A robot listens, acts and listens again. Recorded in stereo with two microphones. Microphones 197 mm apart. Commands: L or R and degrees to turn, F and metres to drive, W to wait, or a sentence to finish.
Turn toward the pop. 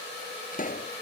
L45
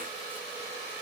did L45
W
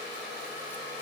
I heard a pop, but can't make it out now. It was about straight ahead or 90° left.